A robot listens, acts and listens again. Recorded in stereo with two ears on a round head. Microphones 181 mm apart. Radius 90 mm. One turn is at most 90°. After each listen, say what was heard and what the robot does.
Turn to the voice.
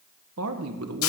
Turn 90° right.
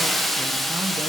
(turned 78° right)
Nothing new. It was at 10° right. Turn 10° right.
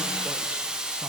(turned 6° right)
Keep listening.
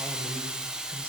I heard a man speaking from this way, but can't make it out now.